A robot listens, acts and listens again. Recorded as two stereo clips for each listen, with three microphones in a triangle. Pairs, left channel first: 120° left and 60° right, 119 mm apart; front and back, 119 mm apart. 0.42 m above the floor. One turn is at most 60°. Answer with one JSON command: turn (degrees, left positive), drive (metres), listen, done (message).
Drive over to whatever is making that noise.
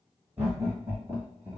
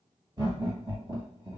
{"turn": -60}
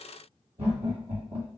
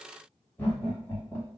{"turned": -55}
{"turn": -60}
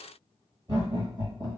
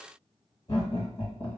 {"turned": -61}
{"turn": -15}
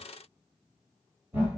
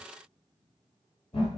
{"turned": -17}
{"drive": 1.0}
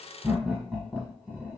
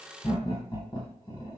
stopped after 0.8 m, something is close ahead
{"turn": 10}
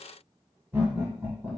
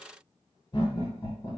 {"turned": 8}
{"done": "I am next to the laughter."}